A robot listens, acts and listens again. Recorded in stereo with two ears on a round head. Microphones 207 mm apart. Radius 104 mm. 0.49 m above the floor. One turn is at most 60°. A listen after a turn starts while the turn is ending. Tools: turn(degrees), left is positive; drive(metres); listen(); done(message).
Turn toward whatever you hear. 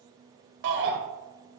turn(degrees=-50)
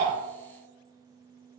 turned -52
listen()
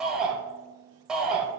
done("Found it: a shout, straight ahead.")